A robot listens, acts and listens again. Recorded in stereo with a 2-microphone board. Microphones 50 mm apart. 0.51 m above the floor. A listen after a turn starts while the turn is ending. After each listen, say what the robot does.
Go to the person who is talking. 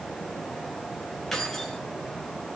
Keep listening.
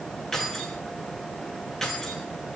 Keep listening.
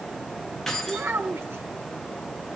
Turn 60° right.
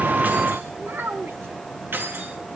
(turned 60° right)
Turn 60° right.
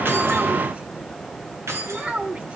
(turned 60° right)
Turn 30° right.
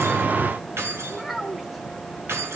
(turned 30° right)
Drive 1.0 m forward.
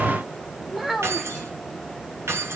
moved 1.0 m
Drive 1.0 m forward.
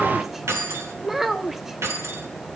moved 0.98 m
Drive 1.0 m forward.
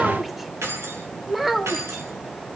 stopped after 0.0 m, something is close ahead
I am next to the child speaking.